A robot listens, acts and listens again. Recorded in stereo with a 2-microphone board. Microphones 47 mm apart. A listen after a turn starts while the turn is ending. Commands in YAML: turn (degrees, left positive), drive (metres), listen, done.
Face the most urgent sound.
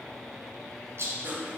listen: true
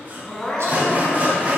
turn: 30
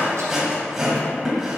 listen: true
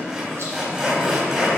listen: true
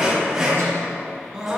turn: -15
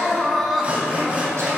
done: "Found it: crying, straight ahead, 1 to 2 m away."